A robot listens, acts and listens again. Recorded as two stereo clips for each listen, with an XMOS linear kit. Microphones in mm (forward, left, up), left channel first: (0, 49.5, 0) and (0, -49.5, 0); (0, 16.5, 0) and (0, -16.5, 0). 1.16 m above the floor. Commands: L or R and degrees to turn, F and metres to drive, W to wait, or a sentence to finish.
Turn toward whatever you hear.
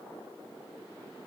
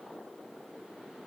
W
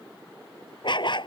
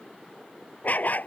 L55
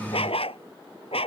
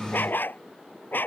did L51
L75
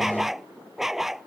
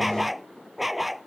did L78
Facing the dog barking.